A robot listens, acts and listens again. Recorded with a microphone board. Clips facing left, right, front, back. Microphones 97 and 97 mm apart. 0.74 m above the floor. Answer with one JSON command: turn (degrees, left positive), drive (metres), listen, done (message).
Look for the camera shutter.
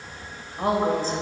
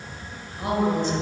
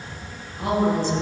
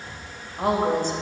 {"listen": true}
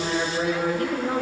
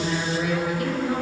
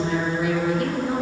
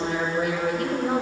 {"listen": true}
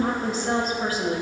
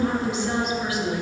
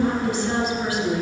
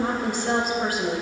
{"done": "I can't make out a camera shutter, only a woman speaking."}